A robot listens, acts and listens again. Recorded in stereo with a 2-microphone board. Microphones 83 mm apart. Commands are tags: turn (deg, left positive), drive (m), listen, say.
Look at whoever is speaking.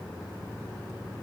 <listen/>
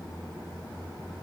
<listen/>
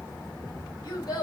<turn deg="55"/>
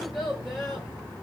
<say>Facing the child speaking, 1 to 2 m away.</say>